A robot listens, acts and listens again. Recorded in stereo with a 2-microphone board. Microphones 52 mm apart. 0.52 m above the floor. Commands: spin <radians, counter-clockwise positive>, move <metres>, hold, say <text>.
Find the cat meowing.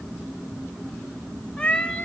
spin 0.44
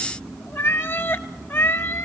spin 2.18
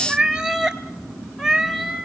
spin -0.26
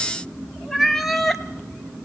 say Found it: a cat meowing, straight ahead.